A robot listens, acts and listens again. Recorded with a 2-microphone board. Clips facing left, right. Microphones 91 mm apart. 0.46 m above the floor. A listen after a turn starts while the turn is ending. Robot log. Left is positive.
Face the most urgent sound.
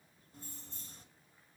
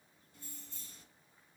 cmd idle
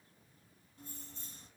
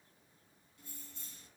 cmd idle
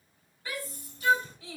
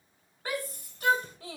note: The shout: about 55° right or 125° right.
cmd yaw -55
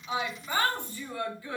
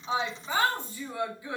note: So it is at 20° right.
cmd yaw -20
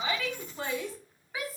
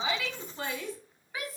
end: Found it: a shout, straight ahead, 1 to 2 m away.